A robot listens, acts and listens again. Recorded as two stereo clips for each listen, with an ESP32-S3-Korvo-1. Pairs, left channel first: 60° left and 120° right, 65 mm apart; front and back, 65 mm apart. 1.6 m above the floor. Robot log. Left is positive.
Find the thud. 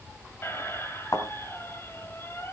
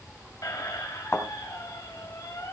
note: The thud: 45° left.
cmd yaw +45
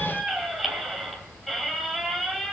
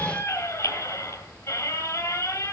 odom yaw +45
end: I heard a thud from this way, but can't make it out now.